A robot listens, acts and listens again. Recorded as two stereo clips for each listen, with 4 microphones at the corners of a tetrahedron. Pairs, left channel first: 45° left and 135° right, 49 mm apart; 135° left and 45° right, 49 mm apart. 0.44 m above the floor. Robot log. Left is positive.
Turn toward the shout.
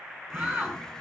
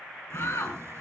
note: The shout: 160° left.
cmd yaw +160
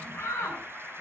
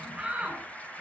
note: The shout is now 25° left.
cmd yaw +25
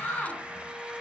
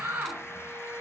note: The shout is now 10° right.
cmd yaw -10
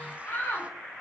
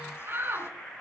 end: Facing the shout, over 4 m away.